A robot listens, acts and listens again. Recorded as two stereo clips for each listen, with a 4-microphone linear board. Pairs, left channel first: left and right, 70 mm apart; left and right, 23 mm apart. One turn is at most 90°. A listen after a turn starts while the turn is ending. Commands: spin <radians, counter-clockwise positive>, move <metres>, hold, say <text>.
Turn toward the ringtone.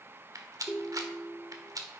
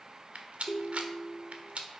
spin 0.26
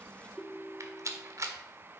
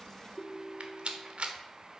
say Found it: a ringtone, straight ahead.